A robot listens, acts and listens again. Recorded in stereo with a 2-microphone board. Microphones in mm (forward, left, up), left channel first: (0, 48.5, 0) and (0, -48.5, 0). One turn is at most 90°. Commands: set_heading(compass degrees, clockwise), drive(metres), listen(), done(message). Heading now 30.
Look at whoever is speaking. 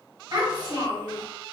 set_heading(75)
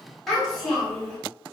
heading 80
done("Found it: a child speaking, straight ahead, 1 to 2 m away.")